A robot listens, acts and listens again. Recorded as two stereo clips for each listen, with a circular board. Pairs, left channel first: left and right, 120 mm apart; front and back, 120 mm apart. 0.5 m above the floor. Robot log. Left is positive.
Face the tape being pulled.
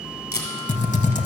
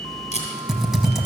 note: The tape being pulled: 20° left.
cmd yaw +20
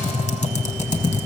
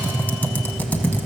cmd idle
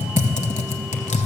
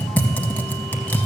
cmd idle
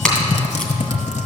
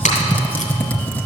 end: Found it: tape being pulled, straight ahead.